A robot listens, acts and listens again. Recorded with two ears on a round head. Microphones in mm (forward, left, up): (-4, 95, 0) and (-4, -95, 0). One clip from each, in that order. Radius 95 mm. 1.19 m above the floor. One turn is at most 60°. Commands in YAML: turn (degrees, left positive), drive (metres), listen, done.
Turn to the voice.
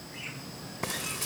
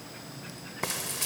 listen: true
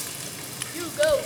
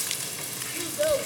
turn: 50
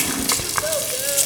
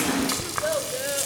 listen: true
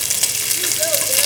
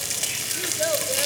listen: true
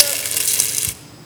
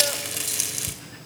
done: "I heard a child speaking, but can't make it out now. It was about straight ahead or 80° left."